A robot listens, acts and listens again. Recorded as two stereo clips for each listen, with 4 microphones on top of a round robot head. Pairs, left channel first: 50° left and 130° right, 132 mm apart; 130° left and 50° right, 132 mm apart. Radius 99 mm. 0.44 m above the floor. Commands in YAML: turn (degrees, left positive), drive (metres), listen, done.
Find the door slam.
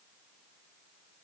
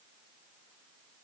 listen: true
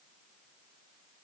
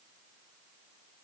listen: true
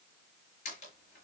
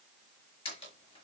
turn: 85
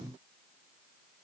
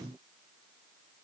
done: "I heard a door slam from this way, but can't make it out now."